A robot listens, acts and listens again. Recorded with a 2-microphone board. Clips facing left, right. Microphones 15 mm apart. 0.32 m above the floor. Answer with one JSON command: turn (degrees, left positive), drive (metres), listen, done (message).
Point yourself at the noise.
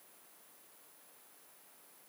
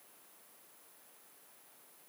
{"listen": true}
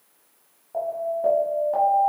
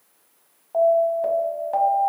{"turn": -40}
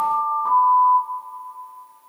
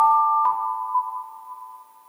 {"turn": -100}
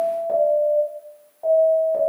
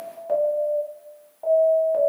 {"turn": -15}
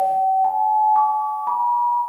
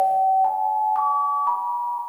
{"done": "Found it: an alarm, straight ahead, 1 to 2 m away."}